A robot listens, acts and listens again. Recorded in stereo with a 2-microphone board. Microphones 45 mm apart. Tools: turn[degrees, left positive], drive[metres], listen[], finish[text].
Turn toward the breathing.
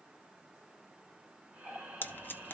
Thought: The breathing: about 30° right or 150° right.
Action: turn[-30]
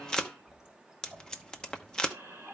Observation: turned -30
Thought: So it is at 120° right.
Action: turn[-120]
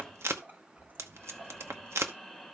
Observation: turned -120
Action: finish[Facing the breathing.]